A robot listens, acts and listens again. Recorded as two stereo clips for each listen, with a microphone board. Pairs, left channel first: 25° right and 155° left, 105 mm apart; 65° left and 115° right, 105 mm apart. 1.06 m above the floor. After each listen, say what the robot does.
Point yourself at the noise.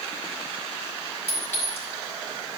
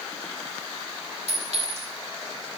Turn 95° right.
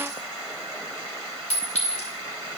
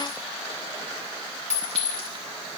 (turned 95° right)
Turn 10° right.
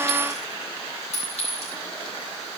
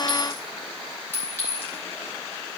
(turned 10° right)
Facing the clink, 2 to 4 m away.